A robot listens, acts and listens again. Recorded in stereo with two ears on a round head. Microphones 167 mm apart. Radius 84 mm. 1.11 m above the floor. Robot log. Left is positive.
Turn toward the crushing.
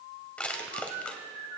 cmd yaw +30
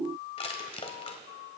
note: So it is at 140° left.
cmd yaw +140
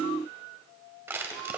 note: The crushing is now 15° right.
cmd yaw -15
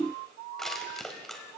end: Facing the crushing, 1 to 2 m away.